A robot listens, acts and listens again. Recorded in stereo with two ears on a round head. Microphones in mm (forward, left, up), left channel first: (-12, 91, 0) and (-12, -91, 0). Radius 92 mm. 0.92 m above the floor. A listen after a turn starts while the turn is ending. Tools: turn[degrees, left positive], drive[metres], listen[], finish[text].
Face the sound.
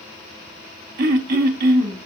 Thought: The throat clearing: about 50° right or 130° right.
Action: turn[-50]
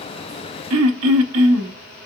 Thought: So it is at 80° right.
Action: turn[-80]
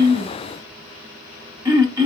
Thought: The throat clearing is now 15° right.
Action: turn[-15]
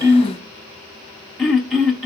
Action: finish[Facing the throat clearing, under 1 m away.]